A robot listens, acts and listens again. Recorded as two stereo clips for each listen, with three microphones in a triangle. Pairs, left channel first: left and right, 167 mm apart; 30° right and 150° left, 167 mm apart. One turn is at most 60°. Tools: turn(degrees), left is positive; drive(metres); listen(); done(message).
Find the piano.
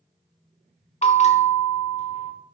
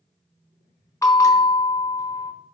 listen()
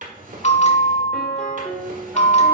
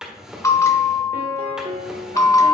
turn(degrees=60)
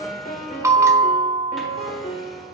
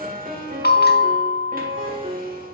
turn(degrees=60)
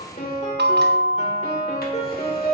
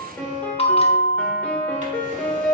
turn(degrees=50)
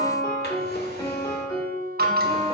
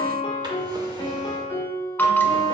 turn(degrees=25)
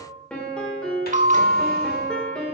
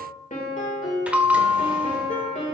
done("Found it: a piano, straight ahead, 1 to 2 m away.")